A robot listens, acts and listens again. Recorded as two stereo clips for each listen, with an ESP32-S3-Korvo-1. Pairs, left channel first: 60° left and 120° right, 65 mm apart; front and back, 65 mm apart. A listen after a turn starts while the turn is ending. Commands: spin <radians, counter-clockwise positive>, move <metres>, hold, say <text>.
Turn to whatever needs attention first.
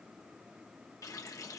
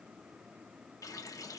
hold
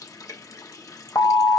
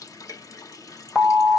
spin 1.48
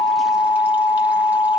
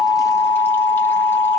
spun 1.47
say Found it: an alarm, straight ahead.